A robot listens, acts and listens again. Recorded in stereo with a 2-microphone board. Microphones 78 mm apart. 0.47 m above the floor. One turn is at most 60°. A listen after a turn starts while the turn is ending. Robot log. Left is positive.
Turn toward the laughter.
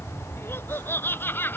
note: The laughter: about 25° left or 155° left.
cmd yaw +25
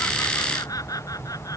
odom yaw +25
note: So it is at 130° left.
cmd yaw +60
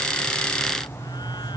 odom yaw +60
note: Nothing new. It was at 70° left.
cmd yaw +60
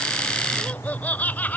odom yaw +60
note: The laughter is now 20° left.
cmd yaw +20
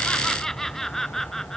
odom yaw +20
end: Facing the laughter.